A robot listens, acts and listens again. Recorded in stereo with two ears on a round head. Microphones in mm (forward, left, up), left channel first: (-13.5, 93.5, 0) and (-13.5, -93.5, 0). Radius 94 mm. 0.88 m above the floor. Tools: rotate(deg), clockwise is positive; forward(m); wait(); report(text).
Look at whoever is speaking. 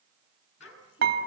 rotate(-70)
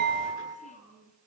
rotate(-40)
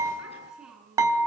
report("Facing the child speaking, over 4 m away.")